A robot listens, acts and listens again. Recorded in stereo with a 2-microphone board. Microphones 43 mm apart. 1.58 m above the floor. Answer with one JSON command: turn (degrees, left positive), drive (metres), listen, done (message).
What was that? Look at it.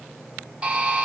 {"turn": -25}
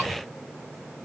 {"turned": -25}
{"listen": true}
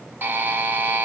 {"turn": -125}
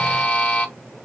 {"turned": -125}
{"turn": 25}
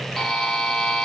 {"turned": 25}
{"done": "Found it: a buzzer, straight ahead."}